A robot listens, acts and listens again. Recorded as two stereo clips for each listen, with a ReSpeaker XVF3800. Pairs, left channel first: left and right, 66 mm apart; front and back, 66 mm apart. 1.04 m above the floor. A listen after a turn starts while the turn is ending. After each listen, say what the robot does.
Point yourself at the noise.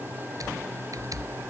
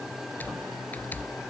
Turn 65° right.
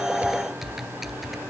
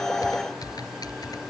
Facing the typing on a keyboard.